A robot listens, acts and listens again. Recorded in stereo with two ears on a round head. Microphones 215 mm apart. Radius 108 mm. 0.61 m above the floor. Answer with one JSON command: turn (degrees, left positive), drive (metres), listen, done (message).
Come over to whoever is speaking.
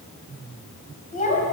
{"turn": 35}
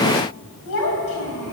{"turn": 110}
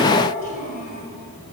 {"turn": 35}
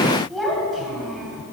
{"drive": 1.0}
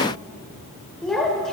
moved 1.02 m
{"drive": 1.0}
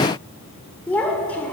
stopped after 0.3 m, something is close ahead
{"done": "I am next to the child speaking."}